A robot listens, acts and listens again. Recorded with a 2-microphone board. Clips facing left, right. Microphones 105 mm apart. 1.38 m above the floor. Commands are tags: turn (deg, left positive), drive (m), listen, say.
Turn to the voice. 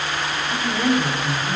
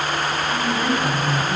<turn deg="25"/>
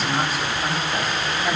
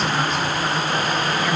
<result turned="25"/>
<listen/>
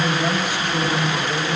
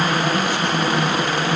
<turn deg="20"/>
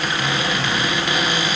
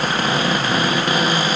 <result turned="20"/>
<listen/>
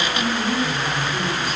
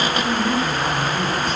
<turn deg="30"/>
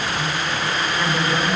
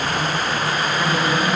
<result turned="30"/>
<turn deg="-20"/>
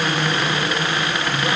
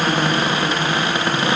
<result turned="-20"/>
<say>Found it: a woman speaking, straight ahead.</say>